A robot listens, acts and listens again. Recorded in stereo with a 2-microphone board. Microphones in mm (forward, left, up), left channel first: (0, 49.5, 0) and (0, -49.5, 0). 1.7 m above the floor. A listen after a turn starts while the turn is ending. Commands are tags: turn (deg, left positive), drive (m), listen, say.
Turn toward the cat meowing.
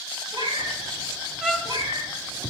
<turn deg="-60"/>
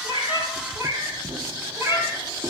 <turn deg="-25"/>
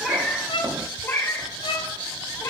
<turn deg="35"/>
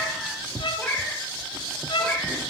<turn deg="10"/>
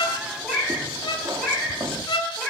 <say>Facing the cat meowing.</say>